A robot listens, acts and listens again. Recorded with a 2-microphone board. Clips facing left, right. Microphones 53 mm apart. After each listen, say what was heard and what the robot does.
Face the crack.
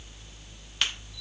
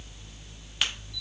Turn 30° left.
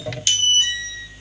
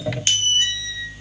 So it is at 35° right. Turn 35° right.
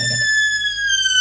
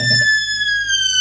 I heard a crack from this way, but can't make it out now.